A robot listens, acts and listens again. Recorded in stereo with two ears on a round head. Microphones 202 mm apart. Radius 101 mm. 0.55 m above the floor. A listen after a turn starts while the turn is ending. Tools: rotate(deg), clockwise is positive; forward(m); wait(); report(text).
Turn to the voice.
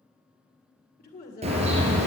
rotate(-40)
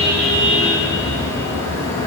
wait()
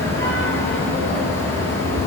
wait()
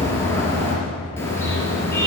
report("I heard a woman speaking, but can't make it out now. It was about straight ahead or 100° left.")